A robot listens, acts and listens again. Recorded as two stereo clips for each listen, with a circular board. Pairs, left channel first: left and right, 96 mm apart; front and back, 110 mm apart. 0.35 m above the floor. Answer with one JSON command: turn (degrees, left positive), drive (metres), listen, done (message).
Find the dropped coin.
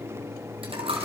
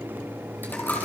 {"turn": -75}
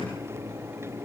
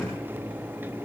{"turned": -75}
{"done": "Facing where the dropped coin came from. I can't hear it now."}